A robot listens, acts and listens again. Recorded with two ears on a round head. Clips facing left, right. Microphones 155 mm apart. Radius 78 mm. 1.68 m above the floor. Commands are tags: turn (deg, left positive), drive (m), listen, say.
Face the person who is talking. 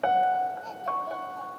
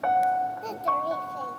<turn deg="-70"/>
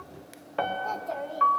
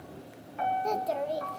<turn deg="-40"/>
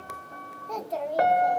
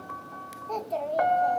<say>Found it: a child speaking, straight ahead.</say>